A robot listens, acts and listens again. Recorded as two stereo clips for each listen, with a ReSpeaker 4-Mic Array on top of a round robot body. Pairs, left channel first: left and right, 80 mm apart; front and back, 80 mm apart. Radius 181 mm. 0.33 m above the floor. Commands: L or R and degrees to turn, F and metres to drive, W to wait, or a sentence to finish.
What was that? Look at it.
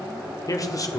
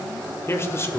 L55
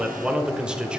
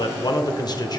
R15
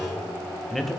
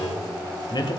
Facing the man speaking, 1 to 2 m away.